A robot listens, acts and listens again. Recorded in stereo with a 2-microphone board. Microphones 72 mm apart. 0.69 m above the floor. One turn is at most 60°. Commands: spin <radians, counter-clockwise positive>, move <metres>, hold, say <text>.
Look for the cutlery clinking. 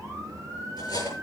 spin 1.05
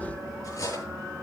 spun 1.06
spin 0.79
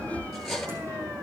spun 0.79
say Found it: cutlery clinking, straight ahead.